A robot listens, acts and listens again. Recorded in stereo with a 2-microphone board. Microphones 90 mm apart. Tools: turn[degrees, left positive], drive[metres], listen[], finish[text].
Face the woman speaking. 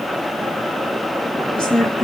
Action: turn[30]
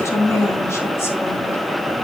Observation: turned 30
Thought: So it is at 145° left.
Action: turn[145]
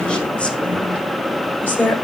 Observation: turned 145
Thought: The woman speaking is now 25° left.
Action: turn[25]
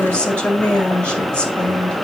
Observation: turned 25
Thought: The woman speaking is now 15° left.
Action: turn[15]
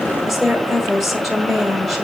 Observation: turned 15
Action: finish[Found it: a woman speaking, straight ahead, 1 to 2 m away.]